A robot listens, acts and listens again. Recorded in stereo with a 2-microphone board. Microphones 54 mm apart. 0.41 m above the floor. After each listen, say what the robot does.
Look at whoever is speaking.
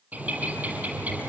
Keep listening.
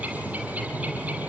Keep listening.
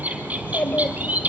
Turn 35° left.
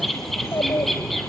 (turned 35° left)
Turn 110° left.
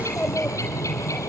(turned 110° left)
Turn 15° left.
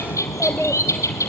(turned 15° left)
Found it: a child speaking, straight ahead.